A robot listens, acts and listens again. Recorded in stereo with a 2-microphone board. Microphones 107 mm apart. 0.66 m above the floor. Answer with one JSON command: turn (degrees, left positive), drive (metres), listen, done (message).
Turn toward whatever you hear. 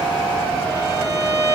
{"turn": -35}
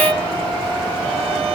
{"turn": -110}
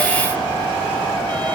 {"listen": true}
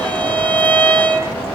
{"turn": 15}
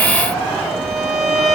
{"done": "Facing the violin."}